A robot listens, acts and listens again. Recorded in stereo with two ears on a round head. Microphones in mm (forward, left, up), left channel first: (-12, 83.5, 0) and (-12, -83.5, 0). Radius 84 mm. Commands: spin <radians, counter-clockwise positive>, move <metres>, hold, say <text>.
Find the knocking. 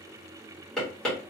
spin 0.52
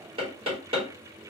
spin -0.52
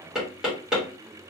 say Found it: knocking, straight ahead.